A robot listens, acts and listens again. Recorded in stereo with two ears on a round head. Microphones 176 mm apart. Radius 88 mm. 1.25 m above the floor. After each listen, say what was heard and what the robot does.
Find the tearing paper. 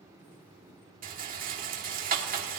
Keep listening.
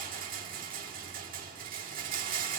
Keep listening.
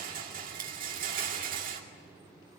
I can't make out tearing paper to turn to.